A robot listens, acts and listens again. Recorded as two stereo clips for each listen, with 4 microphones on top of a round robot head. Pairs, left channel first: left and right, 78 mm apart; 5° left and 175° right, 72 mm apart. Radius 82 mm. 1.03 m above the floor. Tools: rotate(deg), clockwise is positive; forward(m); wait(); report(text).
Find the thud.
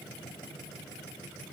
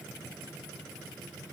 wait()
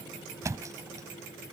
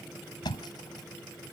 rotate(40)
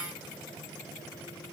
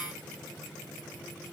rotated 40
report("I heard a thud from this way, but can't make it out now.")